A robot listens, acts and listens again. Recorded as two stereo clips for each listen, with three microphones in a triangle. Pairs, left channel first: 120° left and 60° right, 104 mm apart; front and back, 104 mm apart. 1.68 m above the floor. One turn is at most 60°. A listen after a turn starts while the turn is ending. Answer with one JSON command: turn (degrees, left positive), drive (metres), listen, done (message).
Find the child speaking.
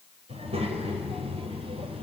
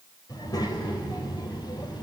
{"turn": -45}
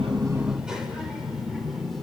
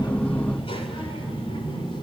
{"turn": 30}
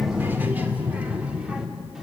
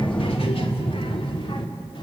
{"turn": 25}
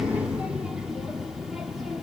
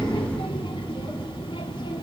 {"turn": 25}
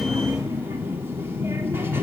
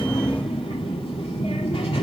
{"done": "Facing the child speaking."}